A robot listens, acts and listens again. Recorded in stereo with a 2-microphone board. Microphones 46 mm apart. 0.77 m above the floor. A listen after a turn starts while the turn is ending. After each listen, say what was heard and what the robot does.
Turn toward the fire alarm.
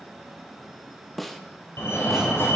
The fire alarm: about 65° left or 115° left. Turn 65° left.
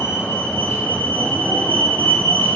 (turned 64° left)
So it is at 50° left. Turn 50° left.
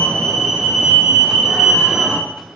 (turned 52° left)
Found it: a fire alarm, straight ahead, over 4 m away.